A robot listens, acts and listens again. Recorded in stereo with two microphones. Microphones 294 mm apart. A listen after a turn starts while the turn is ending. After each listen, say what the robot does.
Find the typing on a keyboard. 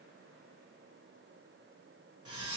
Keep listening.
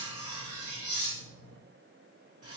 Keep listening.
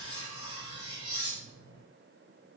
I can't make out typing on a keyboard to turn to.